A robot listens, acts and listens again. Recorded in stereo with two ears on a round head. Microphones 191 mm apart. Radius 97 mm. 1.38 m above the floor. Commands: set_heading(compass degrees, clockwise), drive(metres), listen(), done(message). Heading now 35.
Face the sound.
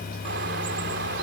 set_heading(85)
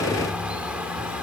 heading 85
done("Facing the bird.")